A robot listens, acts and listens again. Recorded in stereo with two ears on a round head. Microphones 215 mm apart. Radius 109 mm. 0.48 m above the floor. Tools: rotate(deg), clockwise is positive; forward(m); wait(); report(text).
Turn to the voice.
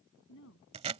rotate(-55)
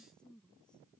report("Found it: a woman speaking, straight ahead.")